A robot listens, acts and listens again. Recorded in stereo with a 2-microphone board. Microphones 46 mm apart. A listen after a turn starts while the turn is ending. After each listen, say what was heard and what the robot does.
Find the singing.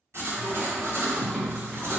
Turn 30° left.
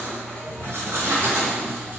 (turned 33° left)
Keep listening.
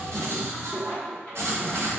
So it is at 145° left. Turn 145° left.
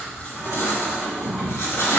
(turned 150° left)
Facing the singing, 1 to 2 m away.